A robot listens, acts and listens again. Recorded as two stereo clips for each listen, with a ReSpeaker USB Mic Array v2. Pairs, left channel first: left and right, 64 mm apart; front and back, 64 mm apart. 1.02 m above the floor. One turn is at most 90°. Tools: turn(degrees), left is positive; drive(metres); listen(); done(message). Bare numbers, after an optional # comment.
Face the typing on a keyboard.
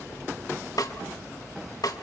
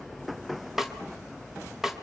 listen()
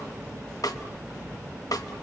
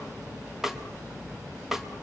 listen()
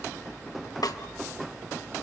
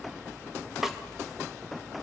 done("I can't make out typing on a keyboard, only a snare drum.")